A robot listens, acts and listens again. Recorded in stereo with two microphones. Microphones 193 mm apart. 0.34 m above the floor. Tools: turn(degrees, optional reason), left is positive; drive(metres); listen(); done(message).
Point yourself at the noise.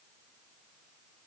listen()
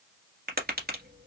turn(degrees=-55, reason="The tapping: about 55° right or 125° right.")
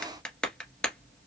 done("Found it: tapping, straight ahead.")